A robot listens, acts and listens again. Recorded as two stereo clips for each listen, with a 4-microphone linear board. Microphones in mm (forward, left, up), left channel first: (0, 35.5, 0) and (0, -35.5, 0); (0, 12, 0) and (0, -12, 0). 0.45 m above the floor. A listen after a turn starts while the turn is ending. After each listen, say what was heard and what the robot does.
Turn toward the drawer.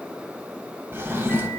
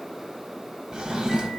The drawer: about 35° right or 145° right. Turn 35° right.
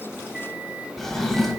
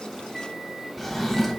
Found it: a drawer, straight ahead, 1 to 2 m away.